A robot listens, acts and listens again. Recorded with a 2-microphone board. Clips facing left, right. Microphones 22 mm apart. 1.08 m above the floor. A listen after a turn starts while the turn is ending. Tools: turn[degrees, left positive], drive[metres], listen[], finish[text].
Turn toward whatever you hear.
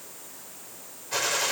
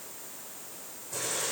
Thought: The gunshot: about 50° left or 130° left.
Action: turn[50]
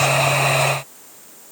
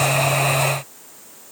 Action: listen[]
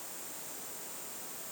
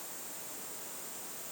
Action: finish[I heard a gunshot, but can't make it out now. It was about straight ahead or 80° left.]